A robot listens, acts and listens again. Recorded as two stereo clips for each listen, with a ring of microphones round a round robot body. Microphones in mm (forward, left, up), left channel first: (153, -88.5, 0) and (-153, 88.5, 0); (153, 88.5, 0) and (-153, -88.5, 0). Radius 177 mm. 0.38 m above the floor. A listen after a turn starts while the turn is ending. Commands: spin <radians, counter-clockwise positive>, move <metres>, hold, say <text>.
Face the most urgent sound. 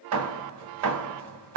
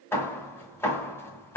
hold
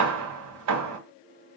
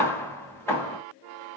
hold
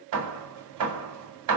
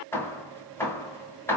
say I can't make out anything urgent to turn to.